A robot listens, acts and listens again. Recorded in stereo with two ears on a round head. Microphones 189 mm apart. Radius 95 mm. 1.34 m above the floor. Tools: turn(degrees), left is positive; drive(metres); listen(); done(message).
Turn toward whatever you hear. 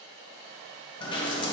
turn(degrees=25)
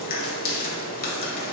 turn(degrees=130)
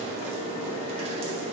turn(degrees=-35)
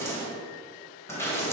turn(degrees=15)
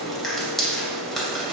done("Facing the dripping, 2 to 4 m away.")